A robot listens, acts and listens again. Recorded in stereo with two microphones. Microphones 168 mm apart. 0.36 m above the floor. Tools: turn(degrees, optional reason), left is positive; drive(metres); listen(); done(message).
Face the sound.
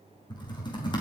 turn(degrees=25, reason="The typing on a keyboard: about 25° left or 155° left.")
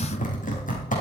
turn(degrees=130, reason="So it is at 130° left.")
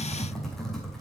done("Facing the typing on a keyboard.")